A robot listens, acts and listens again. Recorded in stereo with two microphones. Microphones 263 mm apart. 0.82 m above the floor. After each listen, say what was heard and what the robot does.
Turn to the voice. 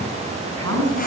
The woman speaking: about 70° right or 110° right. Turn 70° right.
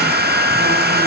Keep listening.
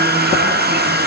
Keep listening.
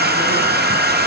I heard a woman speaking, but can't make it out now. It was about straight ahead or 40° right.